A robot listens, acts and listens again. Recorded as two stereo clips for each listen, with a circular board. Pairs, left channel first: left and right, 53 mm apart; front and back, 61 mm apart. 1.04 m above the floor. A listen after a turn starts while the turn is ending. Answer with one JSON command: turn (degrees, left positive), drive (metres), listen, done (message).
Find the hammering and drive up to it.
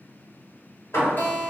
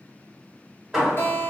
{"turn": 100}
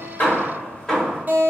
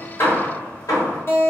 {"turn": 15}
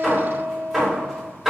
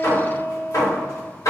{"drive": 1.0}
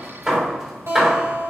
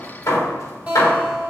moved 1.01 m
{"drive": 1.0}
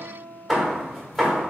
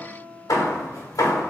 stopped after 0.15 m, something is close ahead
{"done": "Arrived at the hammering, straight ahead."}